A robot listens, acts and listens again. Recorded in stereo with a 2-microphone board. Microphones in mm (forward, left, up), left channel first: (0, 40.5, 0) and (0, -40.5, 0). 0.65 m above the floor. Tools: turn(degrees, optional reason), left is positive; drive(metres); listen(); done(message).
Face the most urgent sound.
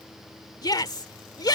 turn(degrees=55, reason="The shout: about 55° left or 125° left.")
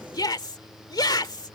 turn(degrees=65, reason="So it is at 65° left.")
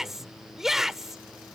done("Found it: a shout, straight ahead.")